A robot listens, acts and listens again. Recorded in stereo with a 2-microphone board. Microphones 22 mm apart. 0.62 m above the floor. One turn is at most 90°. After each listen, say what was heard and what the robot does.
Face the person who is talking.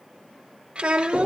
The child speaking: about 60° right or 120° right. Turn 60° right.
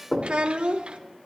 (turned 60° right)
So it is at 55° right. Turn 55° right.
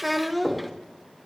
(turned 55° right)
Facing the child speaking.